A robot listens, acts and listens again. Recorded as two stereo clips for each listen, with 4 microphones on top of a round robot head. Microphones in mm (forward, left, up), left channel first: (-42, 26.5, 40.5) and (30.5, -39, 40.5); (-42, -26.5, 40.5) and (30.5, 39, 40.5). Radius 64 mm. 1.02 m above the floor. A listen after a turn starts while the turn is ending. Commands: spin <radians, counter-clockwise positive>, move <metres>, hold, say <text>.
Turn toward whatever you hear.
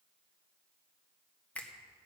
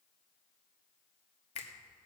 spin -2.53
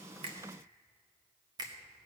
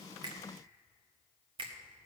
spin 0.17
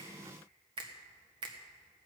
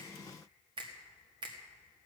say Found it: a finger snap, straight ahead.